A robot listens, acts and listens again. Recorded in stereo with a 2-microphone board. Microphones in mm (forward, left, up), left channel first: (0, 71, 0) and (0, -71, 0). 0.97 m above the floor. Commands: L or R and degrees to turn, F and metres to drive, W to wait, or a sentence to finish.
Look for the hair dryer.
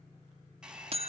R30
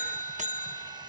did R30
W
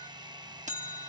R145
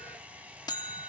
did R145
R10
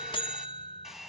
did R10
Facing the hair dryer, 1 to 2 m away.